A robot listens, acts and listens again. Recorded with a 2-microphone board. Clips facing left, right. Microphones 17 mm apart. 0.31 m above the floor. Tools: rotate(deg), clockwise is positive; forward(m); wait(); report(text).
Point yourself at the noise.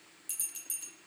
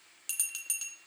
rotate(55)
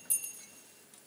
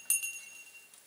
rotate(65)
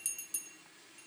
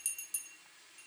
report("Facing the bell.")